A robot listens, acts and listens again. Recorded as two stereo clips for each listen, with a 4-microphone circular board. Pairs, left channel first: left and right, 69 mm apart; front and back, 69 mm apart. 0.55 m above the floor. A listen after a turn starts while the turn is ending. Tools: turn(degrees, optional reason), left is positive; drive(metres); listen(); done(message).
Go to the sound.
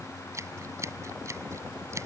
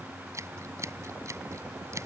turn(degrees=-135, reason="The scissors: 135° right.")
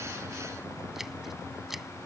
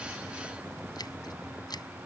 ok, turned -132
drive(metres=1.0)
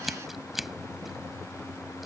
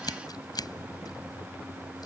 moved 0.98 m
drive(metres=1.0)
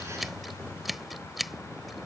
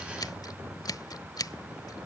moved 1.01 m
drive(metres=1.0)
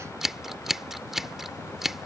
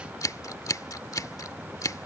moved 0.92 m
drive(metres=1.0)
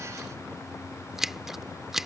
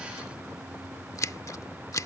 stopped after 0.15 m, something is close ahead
turn(degrees=-10, reason="The scissors is now 10° right.")
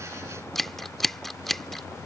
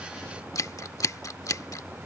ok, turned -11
done("Arrived at the scissors, straight ahead.")